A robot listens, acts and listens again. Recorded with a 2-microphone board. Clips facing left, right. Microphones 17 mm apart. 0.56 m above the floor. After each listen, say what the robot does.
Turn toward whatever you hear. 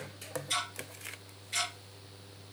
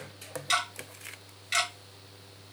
Turn 90° right.
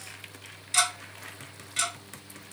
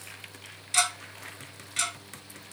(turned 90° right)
Found it: ticking, straight ahead.